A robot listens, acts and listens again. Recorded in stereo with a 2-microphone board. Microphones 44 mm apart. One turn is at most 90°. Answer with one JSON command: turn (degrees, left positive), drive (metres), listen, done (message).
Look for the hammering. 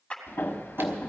{"turn": 60}
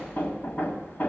{"turn": 55}
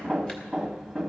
{"done": "Found it: hammering, straight ahead, 1 to 2 m away."}